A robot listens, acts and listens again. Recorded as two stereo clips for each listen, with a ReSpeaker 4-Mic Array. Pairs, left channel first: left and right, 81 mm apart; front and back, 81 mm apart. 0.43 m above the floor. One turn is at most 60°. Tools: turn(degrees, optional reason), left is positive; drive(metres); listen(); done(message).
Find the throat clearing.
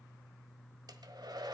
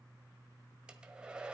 listen()
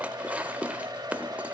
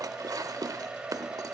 listen()
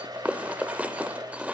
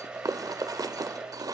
done("I can't make out throat clearing, only a hair dryer and dishes clattering.")